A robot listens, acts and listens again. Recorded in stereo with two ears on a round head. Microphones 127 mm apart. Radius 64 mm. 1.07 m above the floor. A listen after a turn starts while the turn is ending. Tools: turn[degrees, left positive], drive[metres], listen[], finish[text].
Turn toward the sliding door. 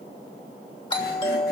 Action: listen[]
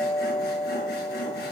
Action: listen[]
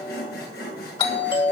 Action: finish[I can't make out a sliding door to turn to.]